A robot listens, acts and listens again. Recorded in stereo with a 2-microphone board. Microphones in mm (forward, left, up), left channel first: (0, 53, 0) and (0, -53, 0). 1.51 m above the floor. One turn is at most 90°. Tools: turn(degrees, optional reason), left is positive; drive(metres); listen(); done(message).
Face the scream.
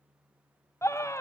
turn(degrees=25, reason="The scream: about 25° left or 155° left.")
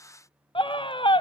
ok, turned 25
turn(degrees=90, reason="So it is at 130° left.")
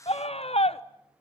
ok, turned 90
turn(degrees=75, reason="The scream is now 75° left.")
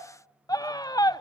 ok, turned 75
turn(degrees=40, reason="The scream is now 40° left.")
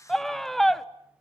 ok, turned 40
done("Found it: a scream, straight ahead.")